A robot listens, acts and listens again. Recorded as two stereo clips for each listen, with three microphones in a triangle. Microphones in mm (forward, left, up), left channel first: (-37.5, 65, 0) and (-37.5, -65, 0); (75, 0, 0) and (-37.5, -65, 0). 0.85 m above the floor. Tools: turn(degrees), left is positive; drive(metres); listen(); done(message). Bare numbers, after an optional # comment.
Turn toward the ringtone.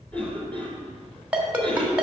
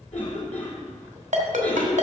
# The ringtone: 170° right.
turn(-170)
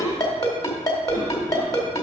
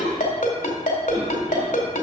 # The ringtone is now 30° left.
turn(30)
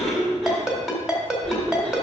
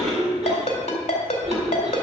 done("Found it: a ringtone, straight ahead, 1 to 2 m away.")